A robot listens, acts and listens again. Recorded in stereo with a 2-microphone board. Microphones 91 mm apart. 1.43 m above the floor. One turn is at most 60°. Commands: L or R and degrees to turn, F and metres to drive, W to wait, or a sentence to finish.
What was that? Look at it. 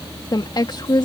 L55
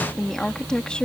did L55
L10
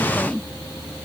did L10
Facing the woman speaking.